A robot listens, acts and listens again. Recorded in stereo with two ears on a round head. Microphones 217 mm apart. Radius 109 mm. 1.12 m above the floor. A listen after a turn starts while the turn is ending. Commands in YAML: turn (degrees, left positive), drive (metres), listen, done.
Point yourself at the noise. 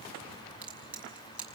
turn: -30
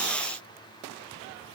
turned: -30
listen: true
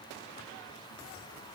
done: "I heard a crack, but can't make it out now. It was about 25° left or 145° right."